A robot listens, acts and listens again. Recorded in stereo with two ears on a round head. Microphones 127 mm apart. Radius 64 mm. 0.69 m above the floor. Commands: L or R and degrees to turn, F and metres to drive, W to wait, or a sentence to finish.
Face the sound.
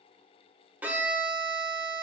R30
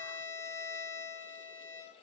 L20
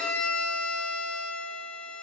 Facing the violin, under 1 m away.